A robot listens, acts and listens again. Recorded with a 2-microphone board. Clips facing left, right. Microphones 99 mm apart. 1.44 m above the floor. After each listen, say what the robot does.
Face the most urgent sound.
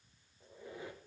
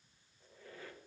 Keep listening.
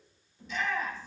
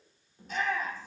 Turn 45° right.
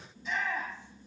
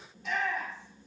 Turn 90° right.
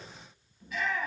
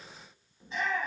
Turn 30° right.
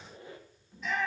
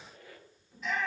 Facing the shout.